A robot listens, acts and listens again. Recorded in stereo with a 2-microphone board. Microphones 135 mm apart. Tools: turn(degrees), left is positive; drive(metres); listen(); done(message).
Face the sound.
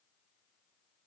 listen()
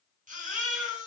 turn(degrees=-70)
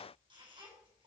turn(degrees=-40)
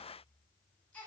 turn(degrees=10)
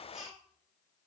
done("Facing the baby crying, over 4 m away.")